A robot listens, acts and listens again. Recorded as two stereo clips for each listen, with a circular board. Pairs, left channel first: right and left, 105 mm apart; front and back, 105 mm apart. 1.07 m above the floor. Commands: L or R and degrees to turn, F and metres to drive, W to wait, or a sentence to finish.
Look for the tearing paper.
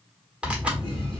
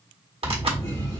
L165
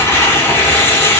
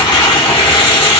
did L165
R25
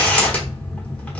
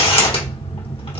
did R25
R15
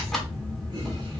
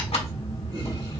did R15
Found it: tearing paper, straight ahead, 1 to 2 m away.